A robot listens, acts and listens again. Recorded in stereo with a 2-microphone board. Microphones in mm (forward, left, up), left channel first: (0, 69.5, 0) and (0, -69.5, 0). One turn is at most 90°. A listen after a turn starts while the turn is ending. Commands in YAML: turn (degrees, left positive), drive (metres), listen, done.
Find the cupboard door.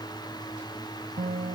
listen: true
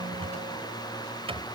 turn: -45
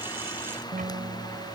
listen: true
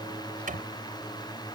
turn: -90
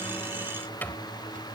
turn: 15
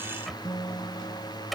done: "Found it: a cupboard door, straight ahead."